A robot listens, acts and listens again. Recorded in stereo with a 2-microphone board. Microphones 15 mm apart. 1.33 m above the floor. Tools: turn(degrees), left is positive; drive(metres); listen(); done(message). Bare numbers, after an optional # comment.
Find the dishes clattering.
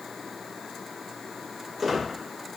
listen()
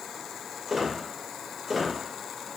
listen()
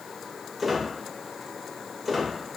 done("I can't make out dishes clattering to turn to.")